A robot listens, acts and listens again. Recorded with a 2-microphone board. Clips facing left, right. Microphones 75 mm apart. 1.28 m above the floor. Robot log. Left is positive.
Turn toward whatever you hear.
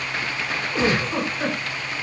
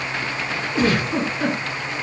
note: The giggle: about 25° left or 155° left.
cmd yaw +25
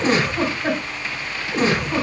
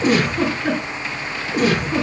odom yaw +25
note: So it is at 130° left.
cmd yaw +130
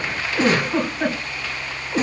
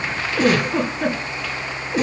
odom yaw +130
note: The giggle is now 40° left.
cmd yaw +40
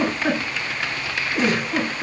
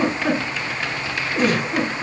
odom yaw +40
note: The giggle is now 15° left.
cmd yaw +15
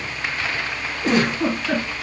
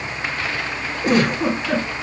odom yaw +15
end: Facing the giggle.